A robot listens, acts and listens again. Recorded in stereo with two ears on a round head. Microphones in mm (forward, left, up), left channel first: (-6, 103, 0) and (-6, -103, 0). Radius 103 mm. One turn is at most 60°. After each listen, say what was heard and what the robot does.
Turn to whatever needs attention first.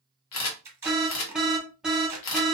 Turn 30° right.
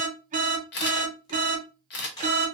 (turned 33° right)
So it is at 145° right. Turn 60° right.
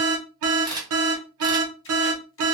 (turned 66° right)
The alarm is now 75° right. Turn 60° right.
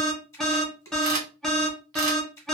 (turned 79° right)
Found it: an alarm, straight ahead, under 1 m away.